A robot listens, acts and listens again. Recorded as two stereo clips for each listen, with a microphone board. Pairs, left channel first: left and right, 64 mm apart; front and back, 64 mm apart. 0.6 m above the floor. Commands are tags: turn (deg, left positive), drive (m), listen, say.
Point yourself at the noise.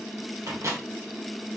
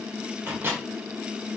<turn deg="-125"/>
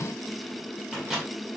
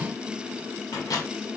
<turn deg="-10"/>
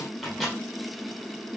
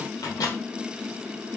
<say>Found it: a microwave, straight ahead, 1 to 2 m away.</say>